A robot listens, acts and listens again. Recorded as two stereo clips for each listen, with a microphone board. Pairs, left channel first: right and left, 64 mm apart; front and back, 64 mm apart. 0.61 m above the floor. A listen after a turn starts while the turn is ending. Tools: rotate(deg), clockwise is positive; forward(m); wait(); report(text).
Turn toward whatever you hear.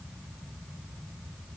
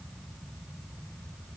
wait()
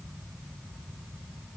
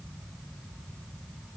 wait()
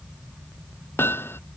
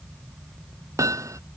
rotate(145)
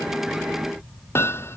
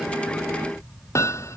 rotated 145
rotate(40)
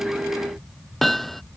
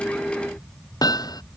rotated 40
report("Found it: hammering, straight ahead.")